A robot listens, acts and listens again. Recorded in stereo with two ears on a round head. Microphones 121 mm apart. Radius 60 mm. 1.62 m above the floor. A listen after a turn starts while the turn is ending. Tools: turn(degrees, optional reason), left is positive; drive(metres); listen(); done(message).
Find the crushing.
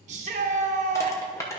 turn(degrees=25, reason="The crushing: about 25° left or 155° left.")
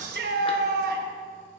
listen()
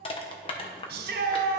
turn(degrees=130, reason="So it is at 130° left.")
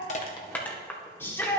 turn(degrees=15, reason="The crushing is now 15° left.")
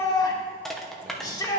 done("Found it: crushing, straight ahead, under 1 m away.")